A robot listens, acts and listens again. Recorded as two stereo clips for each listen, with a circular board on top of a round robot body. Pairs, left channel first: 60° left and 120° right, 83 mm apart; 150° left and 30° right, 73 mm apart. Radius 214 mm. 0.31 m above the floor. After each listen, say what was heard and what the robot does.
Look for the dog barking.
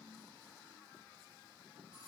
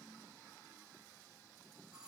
Keep listening.
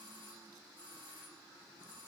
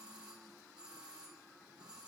Keep listening.
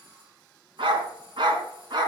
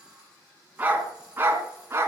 The dog barking: 85° right. Turn 85° right.
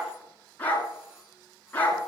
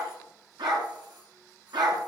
The dog barking is now 10° right. Turn 10° right.
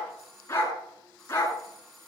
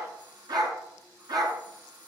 Found it: a dog barking, straight ahead.